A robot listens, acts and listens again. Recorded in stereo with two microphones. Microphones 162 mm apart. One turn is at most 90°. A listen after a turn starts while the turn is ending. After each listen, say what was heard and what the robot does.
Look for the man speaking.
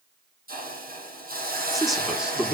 Turn 30° right.
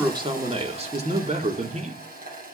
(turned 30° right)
So it is at 130° right. Turn 90° right.
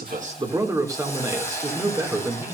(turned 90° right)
The man speaking is now 15° right. Turn 15° right.
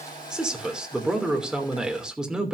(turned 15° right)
Found it: a man speaking, straight ahead.